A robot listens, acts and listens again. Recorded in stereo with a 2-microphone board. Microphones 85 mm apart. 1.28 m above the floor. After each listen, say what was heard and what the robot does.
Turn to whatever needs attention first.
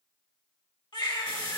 The baby crying: about 60° left or 120° left. Turn 60° left.
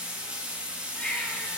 So it is at 20° left. Turn 20° left.
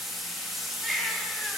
Facing the baby crying, 1 to 2 m away.